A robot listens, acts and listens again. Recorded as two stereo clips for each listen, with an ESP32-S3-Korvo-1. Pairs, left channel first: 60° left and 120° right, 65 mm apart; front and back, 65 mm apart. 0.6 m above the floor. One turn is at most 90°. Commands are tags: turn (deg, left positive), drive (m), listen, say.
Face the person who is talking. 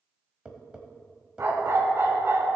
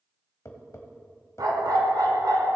<listen/>
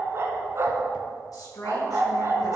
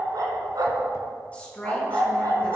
<turn deg="70"/>
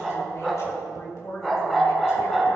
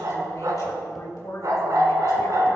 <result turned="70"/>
<turn deg="25"/>
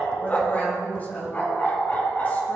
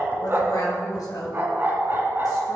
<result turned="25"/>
<say>Found it: a woman speaking, straight ahead.</say>